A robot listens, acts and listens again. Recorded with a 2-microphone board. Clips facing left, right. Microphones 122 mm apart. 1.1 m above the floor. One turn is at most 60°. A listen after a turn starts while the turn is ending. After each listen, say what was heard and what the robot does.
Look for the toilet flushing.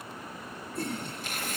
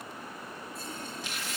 The toilet flushing: about 70° left or 110° left. Turn 60° left.
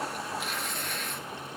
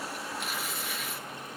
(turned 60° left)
Keep listening.
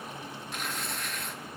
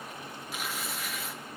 Keep listening.
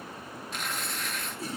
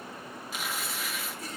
So it is at 30° left. Turn 30° left.
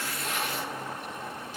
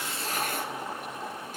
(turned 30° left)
The toilet flushing is now 15° right. Turn 15° right.
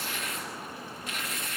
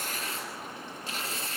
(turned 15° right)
Keep listening.
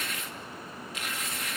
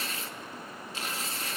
Keep listening.
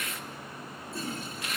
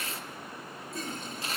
Facing the toilet flushing.